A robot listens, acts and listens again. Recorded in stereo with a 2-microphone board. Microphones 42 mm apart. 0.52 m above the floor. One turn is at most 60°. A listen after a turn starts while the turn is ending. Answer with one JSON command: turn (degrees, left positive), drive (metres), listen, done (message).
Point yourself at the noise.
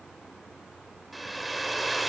{"turn": -30}
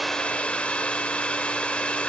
{"turn": 25}
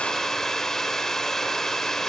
{"turn": 10}
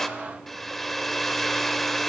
{"done": "Found it: a hair dryer, straight ahead."}